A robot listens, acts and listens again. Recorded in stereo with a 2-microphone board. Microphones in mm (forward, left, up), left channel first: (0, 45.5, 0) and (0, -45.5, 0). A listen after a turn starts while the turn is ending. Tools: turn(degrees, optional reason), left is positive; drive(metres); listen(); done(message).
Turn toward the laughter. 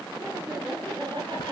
turn(degrees=-65, reason="The laughter: about 65° right or 115° right.")
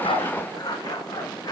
listen()
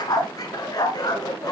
listen()
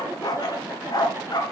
turn(degrees=-25, reason="So it is at 25° right.")
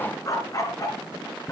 listen()
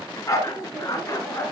turn(degrees=-10, reason="The laughter is now 10° right.")
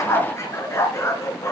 listen()
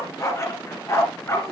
listen()
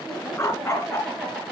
done("Found it: laughter, straight ahead.")